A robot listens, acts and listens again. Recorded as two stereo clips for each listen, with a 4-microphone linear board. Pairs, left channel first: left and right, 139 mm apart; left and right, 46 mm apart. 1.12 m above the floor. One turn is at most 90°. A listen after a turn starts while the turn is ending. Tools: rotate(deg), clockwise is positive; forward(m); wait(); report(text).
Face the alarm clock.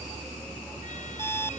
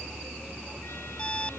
rotate(-15)
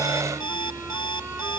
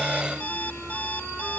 rotate(-90)
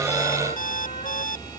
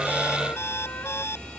rotate(-70)
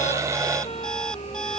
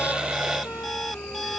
wait()
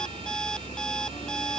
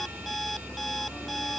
report("Facing the alarm clock.")